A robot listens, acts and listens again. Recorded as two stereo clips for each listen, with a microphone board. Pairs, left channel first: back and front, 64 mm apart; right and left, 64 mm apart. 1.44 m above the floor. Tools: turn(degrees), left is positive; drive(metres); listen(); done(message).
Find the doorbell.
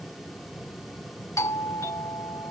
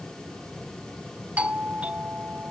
turn(degrees=155)
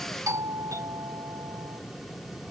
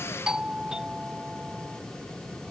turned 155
turn(degrees=15)
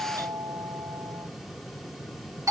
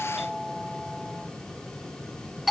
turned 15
done("Facing the doorbell.")